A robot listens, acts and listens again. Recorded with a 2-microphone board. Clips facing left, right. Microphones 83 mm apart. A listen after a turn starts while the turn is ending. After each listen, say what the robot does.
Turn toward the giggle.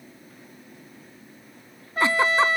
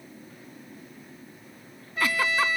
Turn 25° left.
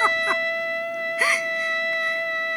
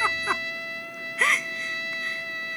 Facing the giggle.